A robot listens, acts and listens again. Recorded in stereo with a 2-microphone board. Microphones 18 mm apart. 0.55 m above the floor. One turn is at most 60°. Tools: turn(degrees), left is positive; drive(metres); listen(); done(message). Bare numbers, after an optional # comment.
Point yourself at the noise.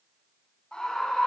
# The scream: about 70° left or 110° left.
turn(60)
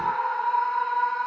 # So it is at 50° left.
turn(50)
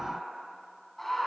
# The scream is now 10° left.
turn(10)
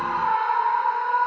done("Found it: a scream, straight ahead, over 4 m away.")